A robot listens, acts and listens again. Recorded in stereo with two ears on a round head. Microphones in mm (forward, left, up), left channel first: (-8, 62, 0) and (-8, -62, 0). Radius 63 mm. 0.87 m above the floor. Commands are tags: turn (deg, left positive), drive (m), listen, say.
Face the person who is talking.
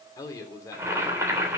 <turn deg="25"/>
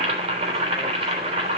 <listen/>
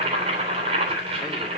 <listen/>
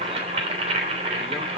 <say>I heard a man speaking, but can't make it out now. It was about straight ahead or 130° left.</say>